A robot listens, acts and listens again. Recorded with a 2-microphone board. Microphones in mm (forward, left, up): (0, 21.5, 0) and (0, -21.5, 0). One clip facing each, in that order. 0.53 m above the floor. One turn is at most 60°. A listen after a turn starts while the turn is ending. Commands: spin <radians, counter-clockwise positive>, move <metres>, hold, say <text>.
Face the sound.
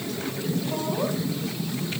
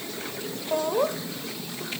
spin -0.87
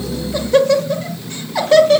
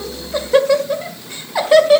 spin -0.17
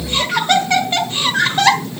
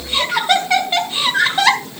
say Found it: laughter, straight ahead, 1 to 2 m away.